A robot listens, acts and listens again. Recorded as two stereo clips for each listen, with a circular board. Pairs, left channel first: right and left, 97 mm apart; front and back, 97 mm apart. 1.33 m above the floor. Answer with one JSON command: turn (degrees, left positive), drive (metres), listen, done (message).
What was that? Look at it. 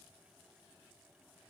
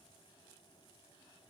{"listen": true}
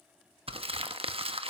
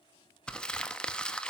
{"turn": 80}
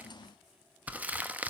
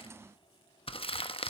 {"turn": 15}
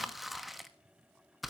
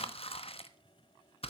{"done": "Found it: crumpling, straight ahead, 1 to 2 m away."}